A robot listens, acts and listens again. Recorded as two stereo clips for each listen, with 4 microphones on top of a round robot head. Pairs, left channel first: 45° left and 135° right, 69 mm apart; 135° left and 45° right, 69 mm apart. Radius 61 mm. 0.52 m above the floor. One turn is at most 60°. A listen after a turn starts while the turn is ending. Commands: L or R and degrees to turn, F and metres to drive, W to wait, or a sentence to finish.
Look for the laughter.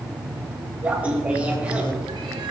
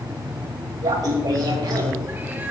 R60
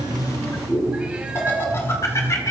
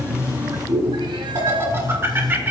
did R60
L10
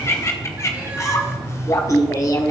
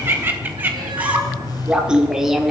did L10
L40
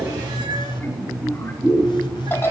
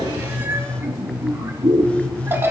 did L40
Found it: laughter, straight ahead, 1 to 2 m away.